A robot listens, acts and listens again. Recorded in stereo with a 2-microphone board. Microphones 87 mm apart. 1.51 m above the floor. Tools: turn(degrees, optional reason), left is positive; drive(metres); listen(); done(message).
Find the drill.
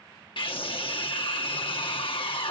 listen()
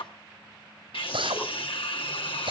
turn(degrees=-90)
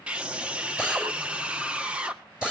turn(degrees=-10, reason="So it is at 10° right.")
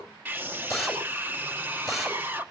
done("Facing the drill, over 4 m away.")